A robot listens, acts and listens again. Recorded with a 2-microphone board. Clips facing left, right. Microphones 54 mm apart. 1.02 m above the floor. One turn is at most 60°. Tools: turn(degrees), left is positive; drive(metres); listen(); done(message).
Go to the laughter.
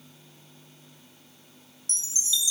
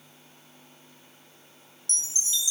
listen()
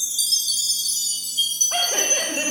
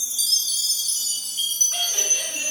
turn(degrees=40)
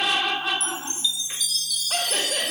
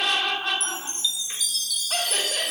drive(metres=1.0)
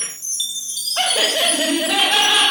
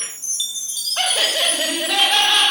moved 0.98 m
drive(metres=1.0)
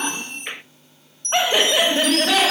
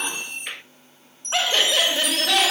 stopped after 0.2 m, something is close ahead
turn(degrees=15)
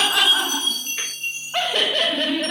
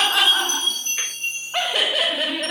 done("I am next to the laughter.")